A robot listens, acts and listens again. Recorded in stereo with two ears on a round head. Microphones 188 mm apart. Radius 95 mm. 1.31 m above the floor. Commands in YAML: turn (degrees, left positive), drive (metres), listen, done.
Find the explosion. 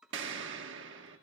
turn: -65
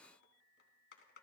listen: true
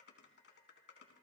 done: "I heard an explosion, but can't make it out now. It was about straight ahead or 50° right."